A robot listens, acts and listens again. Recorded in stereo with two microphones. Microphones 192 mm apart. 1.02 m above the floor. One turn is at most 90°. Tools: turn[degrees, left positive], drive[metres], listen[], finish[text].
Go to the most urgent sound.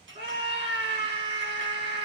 Thought: The scream: about 30° right or 150° right.
Action: turn[-30]
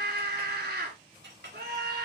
Thought: So it is at 120° right.
Action: turn[-90]
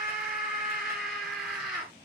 Action: drive[1.0]
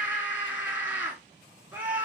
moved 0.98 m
Thought: The scream is now 10° right.
Action: turn[-10]
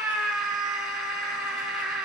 Action: drive[1.0]
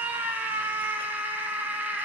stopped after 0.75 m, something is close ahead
Thought: The scream is now 10° right.
Action: turn[-10]
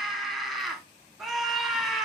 Action: finish[I am next to the scream.]